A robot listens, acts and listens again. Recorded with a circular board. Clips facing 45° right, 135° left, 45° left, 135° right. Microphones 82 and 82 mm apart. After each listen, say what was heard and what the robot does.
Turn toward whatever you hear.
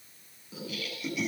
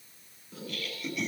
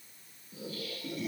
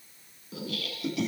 The laughter: 130° right. Turn 130° right.
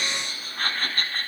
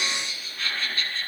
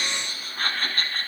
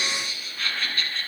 Found it: laughter, straight ahead.